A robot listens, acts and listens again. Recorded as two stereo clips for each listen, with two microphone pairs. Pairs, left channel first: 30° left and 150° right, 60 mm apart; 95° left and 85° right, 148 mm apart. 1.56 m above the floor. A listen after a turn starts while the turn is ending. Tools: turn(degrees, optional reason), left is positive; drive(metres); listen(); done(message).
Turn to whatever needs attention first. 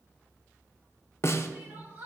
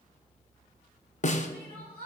turn(degrees=-90, reason="The crying: 90° right.")
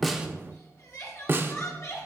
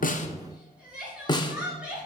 done("Facing the crying.")